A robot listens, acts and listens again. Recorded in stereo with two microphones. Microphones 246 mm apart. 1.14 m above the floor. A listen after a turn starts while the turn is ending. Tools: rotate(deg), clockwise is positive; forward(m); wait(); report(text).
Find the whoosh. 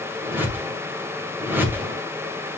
rotate(30)
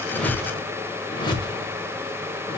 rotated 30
rotate(-20)
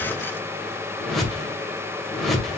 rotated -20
report("Facing the whoosh.")